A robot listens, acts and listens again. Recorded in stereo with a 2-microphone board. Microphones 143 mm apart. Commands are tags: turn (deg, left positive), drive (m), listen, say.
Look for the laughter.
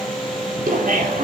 <turn deg="-75"/>
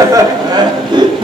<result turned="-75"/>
<turn deg="-35"/>
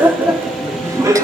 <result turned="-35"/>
<turn deg="-25"/>
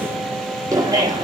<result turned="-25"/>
<turn deg="-30"/>
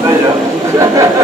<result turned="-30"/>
<turn deg="-20"/>
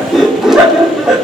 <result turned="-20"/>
<say>Facing the laughter, 2 to 4 m away.</say>